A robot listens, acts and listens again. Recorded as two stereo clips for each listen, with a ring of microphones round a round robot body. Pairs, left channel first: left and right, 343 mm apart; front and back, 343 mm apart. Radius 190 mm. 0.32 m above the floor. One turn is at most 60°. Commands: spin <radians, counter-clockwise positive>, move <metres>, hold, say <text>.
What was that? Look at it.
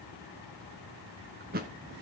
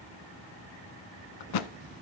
spin -0.35
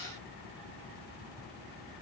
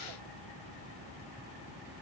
say I heard a thud from this way, but can't make it out now.